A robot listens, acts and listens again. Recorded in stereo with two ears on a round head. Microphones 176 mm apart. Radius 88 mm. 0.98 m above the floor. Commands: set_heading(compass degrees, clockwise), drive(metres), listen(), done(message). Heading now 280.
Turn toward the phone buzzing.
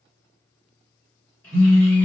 set_heading(320)
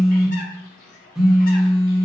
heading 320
done("Facing the phone buzzing, under 1 m away.")